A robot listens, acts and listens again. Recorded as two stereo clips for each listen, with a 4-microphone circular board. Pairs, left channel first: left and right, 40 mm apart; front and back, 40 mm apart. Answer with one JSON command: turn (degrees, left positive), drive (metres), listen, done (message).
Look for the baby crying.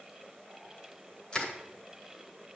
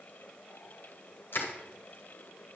{"listen": true}
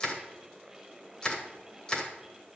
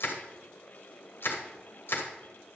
{"listen": true}
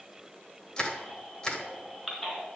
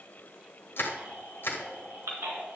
{"turn": 170}
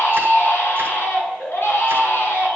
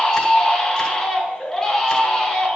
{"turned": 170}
{"turn": 75}
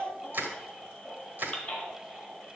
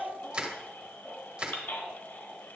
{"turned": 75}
{"turn": 35}
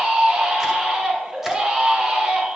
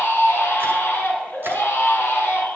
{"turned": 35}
{"turn": -20}
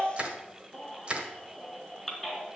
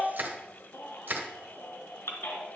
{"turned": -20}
{"done": "Found it: a baby crying, straight ahead, 2 to 4 m away."}